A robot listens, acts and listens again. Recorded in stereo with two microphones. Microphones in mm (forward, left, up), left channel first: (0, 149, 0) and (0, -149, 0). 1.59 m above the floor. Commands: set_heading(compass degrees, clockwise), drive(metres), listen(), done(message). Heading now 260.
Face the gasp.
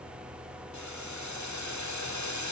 listen()
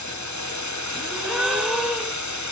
set_heading(230)
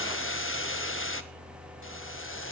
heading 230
listen()
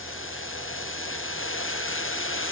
done("I heard a gasp, but can't make it out now. It was about 30° right or 150° left.")